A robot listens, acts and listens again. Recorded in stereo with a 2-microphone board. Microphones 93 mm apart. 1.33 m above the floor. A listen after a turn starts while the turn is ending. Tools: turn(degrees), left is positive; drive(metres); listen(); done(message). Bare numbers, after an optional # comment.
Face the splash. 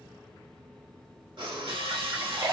# The splash: about 45° right or 135° right.
turn(-45)
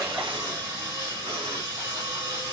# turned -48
listen()
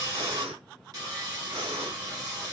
done("I heard a splash, but can't make it out now. It was about 5° left or 90° right.")